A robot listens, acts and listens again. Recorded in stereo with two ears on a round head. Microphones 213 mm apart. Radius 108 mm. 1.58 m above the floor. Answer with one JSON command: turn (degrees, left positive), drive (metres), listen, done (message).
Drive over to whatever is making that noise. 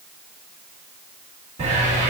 {"turn": -30}
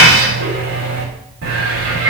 {"turn": -115}
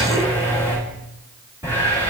{"turn": -10}
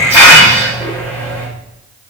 {"turn": -10}
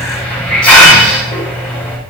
{"drive": 1.0}
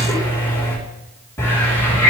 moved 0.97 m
{"turn": 10}
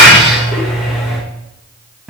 {"drive": 1.0}
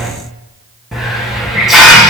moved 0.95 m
{"drive": 1.0}
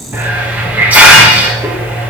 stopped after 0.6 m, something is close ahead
{"done": "Arrived at the hiss, straight ahead."}